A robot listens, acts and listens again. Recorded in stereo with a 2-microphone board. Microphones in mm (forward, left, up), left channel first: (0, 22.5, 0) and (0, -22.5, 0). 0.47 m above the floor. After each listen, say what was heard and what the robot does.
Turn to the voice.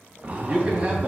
The man speaking: about 25° right or 155° right. Turn 25° right.
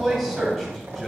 Facing the man speaking, 2 to 4 m away.